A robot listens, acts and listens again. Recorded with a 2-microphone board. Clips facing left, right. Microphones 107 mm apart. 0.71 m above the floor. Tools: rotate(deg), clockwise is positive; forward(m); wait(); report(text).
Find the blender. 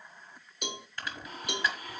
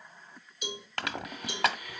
rotate(-35)
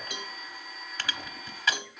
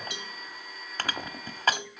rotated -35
report("Facing the blender, 1 to 2 m away.")